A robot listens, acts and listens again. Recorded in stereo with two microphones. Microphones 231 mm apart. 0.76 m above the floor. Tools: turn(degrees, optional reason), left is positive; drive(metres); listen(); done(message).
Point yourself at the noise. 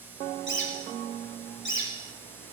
turn(degrees=55, reason="The bird: about 55° left or 125° left.")
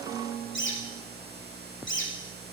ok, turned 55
turn(degrees=65, reason="So it is at 65° left.")
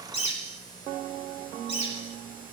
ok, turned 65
turn(degrees=30, reason="The bird is now 30° left.")
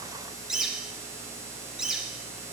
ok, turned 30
done("Facing the bird.")